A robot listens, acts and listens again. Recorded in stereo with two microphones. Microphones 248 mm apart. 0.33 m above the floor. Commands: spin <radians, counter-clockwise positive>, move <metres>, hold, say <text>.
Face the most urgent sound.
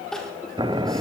spin 0.52
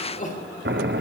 spin 2.53
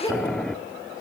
spin 0.26
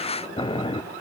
hold
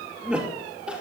say Found it: crying, straight ahead.